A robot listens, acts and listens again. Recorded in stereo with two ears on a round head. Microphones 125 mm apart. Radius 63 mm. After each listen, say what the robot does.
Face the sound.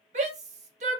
Turn 50° right.
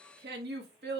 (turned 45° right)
Turn 80° right.
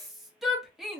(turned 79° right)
Found it: a shout, straight ahead, 1 to 2 m away.